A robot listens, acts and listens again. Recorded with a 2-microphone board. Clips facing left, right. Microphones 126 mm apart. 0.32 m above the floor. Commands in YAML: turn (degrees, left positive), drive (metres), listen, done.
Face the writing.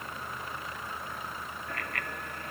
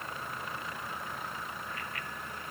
listen: true
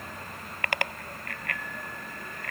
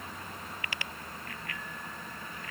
listen: true
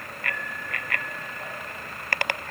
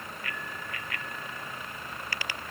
done: "I can't make out writing, only a bicycle bell."